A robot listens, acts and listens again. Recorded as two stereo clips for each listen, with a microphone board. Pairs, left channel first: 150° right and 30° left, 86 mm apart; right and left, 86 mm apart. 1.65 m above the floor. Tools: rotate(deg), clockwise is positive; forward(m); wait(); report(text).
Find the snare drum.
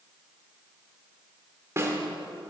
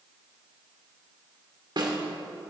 rotate(-80)
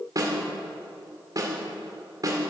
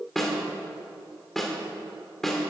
report("Found it: a snare drum, straight ahead.")